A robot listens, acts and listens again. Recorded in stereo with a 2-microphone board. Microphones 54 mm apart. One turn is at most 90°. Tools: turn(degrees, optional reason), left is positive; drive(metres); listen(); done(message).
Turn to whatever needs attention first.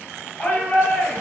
turn(degrees=25, reason="The shout: about 25° left or 155° left.")
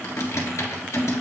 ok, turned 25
listen()
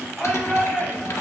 done("Facing the shout.")